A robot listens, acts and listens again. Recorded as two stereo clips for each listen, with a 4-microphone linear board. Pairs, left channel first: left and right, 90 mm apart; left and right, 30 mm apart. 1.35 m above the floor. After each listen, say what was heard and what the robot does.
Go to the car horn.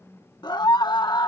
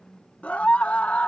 Keep listening.
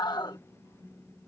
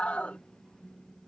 Keep listening.
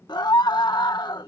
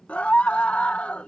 I can't make out a car horn, only a scream.